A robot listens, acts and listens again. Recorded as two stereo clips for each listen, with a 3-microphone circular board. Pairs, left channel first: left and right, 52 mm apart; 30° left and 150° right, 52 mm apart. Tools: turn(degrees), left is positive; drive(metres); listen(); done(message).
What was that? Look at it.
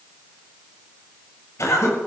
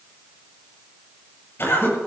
turn(degrees=70)
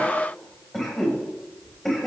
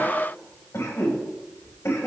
done("Found it: a cough, straight ahead, over 4 m away.")